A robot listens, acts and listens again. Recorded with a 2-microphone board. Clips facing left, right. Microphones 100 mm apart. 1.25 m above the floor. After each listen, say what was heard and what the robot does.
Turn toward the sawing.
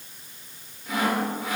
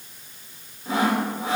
The sawing: about 30° right or 150° right. Turn 30° right.
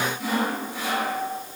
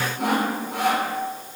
So it is at 115° right. Turn 115° right.
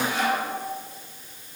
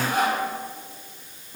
The sawing is now 45° right. Turn 45° right.
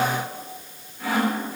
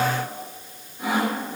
The sawing is now 20° right. Turn 20° right.
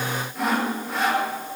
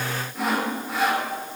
Facing the sawing, 2 to 4 m away.